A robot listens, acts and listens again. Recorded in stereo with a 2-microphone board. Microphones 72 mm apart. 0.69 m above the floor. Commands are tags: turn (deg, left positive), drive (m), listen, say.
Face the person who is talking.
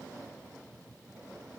<listen/>
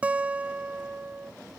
<listen/>
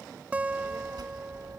<turn deg="-75"/>
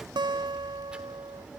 <turn deg="-15"/>
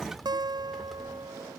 <say>Found it: a child speaking, straight ahead.</say>